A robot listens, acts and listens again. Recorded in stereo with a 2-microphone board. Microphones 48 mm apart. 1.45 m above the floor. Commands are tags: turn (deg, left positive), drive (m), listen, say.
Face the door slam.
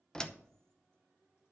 <turn deg="15"/>
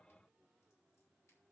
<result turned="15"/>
<listen/>
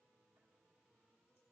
<say>I heard a door slam, but can't make it out now. It was about straight ahead or 150° left.</say>